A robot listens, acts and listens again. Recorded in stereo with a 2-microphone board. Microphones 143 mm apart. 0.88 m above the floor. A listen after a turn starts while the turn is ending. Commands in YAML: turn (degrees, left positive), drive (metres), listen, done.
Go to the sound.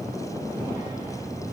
listen: true
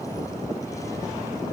listen: true
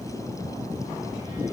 done: "I can't make out anything."